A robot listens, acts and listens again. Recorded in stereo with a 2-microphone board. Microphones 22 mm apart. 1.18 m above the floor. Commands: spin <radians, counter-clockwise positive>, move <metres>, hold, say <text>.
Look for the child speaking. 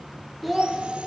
spin -0.52
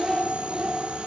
spin -2.36
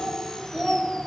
say Facing the child speaking.